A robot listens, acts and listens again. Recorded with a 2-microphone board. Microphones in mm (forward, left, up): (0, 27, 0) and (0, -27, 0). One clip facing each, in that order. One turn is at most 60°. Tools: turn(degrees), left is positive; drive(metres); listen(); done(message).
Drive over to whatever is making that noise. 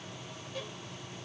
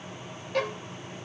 turn(degrees=-60)
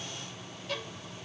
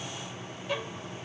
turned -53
turn(degrees=-20)
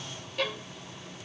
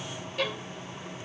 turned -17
drive(metres=1.0)
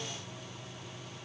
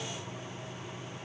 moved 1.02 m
listen()
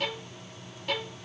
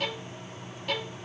drive(metres=1.0)
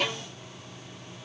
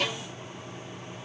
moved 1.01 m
drive(metres=1.0)
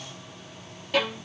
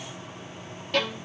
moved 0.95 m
turn(degrees=10)
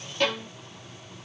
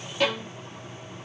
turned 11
drive(metres=1.0)
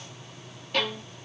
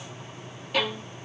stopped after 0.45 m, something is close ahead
turn(degrees=-10)
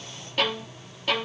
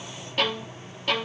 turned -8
done("I am next to the violin.")